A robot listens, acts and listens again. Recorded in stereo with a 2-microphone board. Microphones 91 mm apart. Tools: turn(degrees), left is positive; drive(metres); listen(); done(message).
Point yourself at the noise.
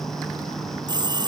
turn(degrees=-50)
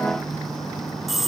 done("Facing the phone ringing.")